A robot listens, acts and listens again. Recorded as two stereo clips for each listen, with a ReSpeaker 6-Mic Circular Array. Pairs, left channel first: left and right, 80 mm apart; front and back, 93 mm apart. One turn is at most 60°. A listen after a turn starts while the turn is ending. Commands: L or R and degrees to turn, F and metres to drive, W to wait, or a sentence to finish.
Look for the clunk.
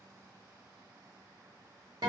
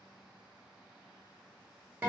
W
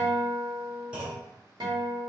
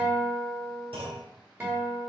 R60
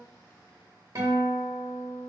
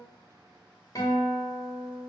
R60
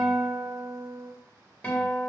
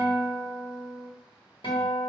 R45
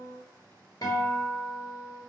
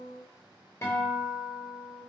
I heard a clunk from this way, but can't make it out now.